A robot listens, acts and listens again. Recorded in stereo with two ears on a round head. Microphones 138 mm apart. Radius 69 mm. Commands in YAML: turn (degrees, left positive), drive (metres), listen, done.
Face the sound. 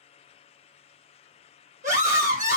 turn: -55
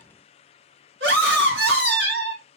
turn: -75
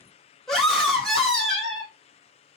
done: "Found it: a scream, straight ahead."